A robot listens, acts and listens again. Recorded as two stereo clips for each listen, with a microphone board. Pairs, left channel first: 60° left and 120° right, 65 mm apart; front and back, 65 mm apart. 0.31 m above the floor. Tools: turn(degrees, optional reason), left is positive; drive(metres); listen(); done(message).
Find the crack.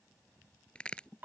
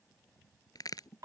turn(degrees=-15, reason="The crack: 15° right.")
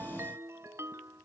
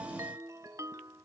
done("I heard a crack from this way, but can't make it out now.")